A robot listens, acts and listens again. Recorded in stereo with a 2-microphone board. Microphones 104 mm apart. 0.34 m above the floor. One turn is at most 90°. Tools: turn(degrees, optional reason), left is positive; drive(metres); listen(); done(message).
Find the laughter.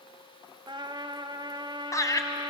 turn(degrees=35, reason="The laughter: about 35° left or 145° left.")
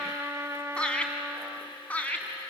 turn(degrees=15, reason="So it is at 15° left.")
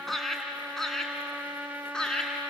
turn(degrees=10, reason="The laughter is now 10° left.")
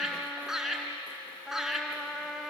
done("Facing the laughter, 2 to 4 m away.")